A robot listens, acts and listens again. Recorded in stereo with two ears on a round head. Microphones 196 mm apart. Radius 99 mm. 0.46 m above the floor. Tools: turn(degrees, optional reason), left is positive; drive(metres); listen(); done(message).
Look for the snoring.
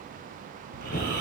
turn(degrees=-40, reason="The snoring: about 40° right or 140° right.")
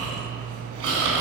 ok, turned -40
turn(degrees=-100, reason="So it is at 100° right.")
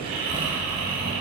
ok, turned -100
turn(degrees=-25, reason="The snoring is now 25° right.")
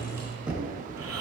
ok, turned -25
turn(degrees=-10, reason="The snoring is now 10° right.")
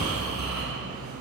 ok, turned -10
done("Found it: snoring, straight ahead, 2 to 4 m away.")